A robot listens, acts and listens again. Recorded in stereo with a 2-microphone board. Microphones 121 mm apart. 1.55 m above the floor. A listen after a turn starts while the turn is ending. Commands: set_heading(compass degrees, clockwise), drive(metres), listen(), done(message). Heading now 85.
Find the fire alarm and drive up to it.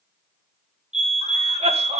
set_heading(150)
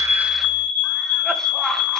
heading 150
set_heading(190)
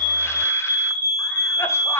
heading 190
set_heading(210)
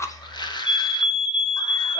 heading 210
drive(1.0)
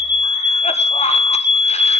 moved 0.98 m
set_heading(225)
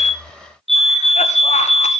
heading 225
drive(1.0)
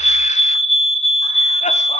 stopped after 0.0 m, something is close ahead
done("Arrived at the fire alarm, straight ahead.")